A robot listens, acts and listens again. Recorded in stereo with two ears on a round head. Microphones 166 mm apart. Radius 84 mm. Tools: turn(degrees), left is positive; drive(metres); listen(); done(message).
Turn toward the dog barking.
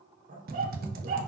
turn(degrees=-45)
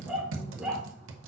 done("Facing the dog barking.")